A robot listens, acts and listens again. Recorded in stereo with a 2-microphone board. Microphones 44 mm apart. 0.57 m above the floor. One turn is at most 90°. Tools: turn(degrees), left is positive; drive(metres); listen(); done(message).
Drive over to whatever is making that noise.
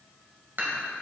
turn(degrees=-50)
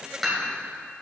drive(metres=1.0)
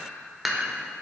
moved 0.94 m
drive(metres=1.0)
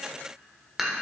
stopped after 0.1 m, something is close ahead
turn(degrees=-10)
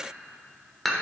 done("Arrived at the dishes clattering, straight ahead.")